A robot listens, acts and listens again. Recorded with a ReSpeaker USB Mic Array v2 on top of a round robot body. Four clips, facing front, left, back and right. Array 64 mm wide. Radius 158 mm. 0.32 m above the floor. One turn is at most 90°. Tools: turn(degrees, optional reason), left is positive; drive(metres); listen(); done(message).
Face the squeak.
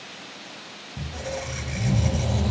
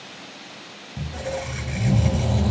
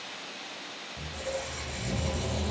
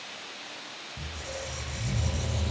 turn(degrees=70, reason="The squeak: 70° left.")
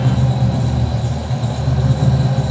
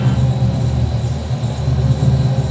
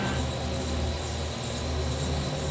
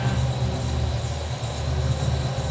done("Found it: a squeak, straight ahead, 1 to 2 m away.")